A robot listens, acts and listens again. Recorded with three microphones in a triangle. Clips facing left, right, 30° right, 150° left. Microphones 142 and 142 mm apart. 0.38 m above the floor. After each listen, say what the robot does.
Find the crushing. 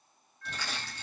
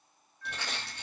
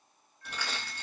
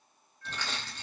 Turn 110° right.
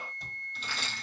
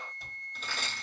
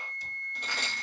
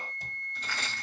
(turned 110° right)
Turn 45° right.
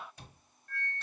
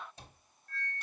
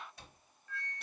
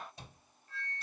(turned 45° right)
Keep listening.
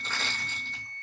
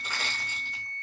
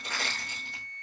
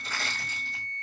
Turn 10° right.
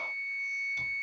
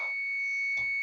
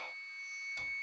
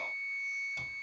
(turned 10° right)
Keep listening.
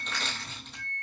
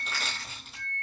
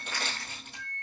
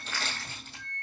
Found it: crushing, straight ahead.